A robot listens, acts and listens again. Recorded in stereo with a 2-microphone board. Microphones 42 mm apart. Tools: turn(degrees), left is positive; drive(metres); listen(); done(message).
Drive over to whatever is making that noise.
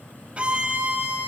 turn(degrees=-30)
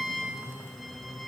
drive(metres=1.0)
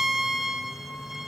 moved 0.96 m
turn(degrees=-10)
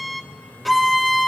drive(metres=1.0)
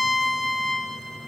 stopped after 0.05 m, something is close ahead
done("Arrived at the violin, straight ahead.")